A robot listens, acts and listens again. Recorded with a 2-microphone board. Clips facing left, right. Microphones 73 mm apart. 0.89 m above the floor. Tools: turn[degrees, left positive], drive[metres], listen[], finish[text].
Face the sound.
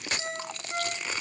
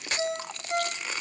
Action: turn[-90]
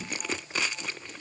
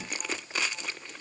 Action: listen[]
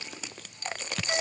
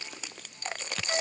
Thought: The ringtone is now 15° left.
Action: turn[15]
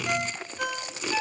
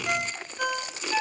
Action: finish[Found it: a ringtone, straight ahead.]